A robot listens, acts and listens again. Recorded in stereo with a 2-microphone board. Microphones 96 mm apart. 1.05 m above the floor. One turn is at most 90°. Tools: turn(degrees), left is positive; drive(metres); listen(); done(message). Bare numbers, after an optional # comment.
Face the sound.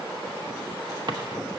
# The drawer: about 55° right or 125° right.
turn(-55)
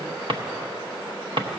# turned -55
# So it is at 70° right.
turn(-70)
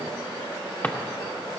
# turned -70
# The drawer is now 20° left.
turn(20)
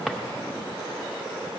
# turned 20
done("Facing the drawer, under 1 m away.")